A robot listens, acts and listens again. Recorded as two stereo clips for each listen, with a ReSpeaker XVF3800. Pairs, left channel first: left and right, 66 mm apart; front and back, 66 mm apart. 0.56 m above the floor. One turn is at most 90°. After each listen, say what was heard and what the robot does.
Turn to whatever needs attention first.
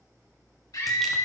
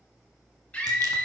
The scream: 70° left. Turn 70° left.
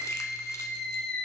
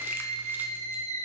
The scream is now 15° left. Turn 15° left.
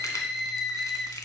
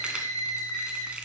Found it: a scream, straight ahead, 2 to 4 m away.